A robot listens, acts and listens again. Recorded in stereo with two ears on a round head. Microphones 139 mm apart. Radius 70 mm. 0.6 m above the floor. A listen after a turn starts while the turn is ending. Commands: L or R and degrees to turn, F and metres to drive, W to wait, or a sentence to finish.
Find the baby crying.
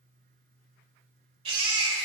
R35
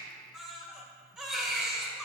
Found it: a baby crying, straight ahead, 1 to 2 m away.